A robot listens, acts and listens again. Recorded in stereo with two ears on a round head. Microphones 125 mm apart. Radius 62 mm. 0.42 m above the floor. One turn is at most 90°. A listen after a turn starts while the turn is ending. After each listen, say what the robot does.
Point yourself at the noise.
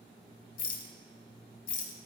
Turn 65° left.
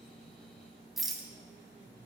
Facing the rattle.